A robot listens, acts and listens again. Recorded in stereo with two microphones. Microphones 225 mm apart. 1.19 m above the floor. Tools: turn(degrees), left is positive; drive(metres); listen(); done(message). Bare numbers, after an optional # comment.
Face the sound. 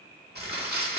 # The crumpling: about 45° right or 135° right.
turn(-45)
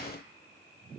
listen()
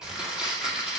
done("Facing the crumpling, 1 to 2 m away.")